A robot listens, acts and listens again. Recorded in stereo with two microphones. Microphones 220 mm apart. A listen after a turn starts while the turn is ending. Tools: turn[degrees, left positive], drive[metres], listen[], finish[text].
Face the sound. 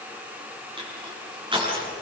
Thought: The crushing: about 20° right or 160° right.
Action: turn[-20]
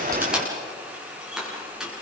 Action: finish[Found it: crushing, straight ahead, over 4 m away.]